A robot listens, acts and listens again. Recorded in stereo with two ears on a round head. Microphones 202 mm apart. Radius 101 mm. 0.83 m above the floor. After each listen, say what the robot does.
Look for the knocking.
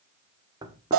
Turn 15° right.
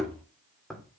Found it: knocking, straight ahead.